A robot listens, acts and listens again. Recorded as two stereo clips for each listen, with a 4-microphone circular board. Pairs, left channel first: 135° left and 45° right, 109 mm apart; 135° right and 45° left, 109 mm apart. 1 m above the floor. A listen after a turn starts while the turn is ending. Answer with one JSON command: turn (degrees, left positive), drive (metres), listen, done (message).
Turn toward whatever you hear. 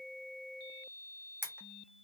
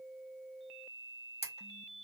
{"turn": -115}
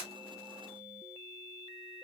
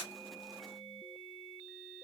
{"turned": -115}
{"listen": true}
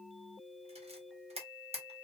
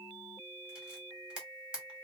{"turn": -35}
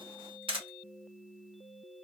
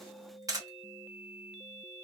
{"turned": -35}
{"turn": -10}
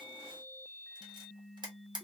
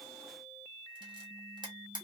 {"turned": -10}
{"done": "Found it: a camera shutter, straight ahead."}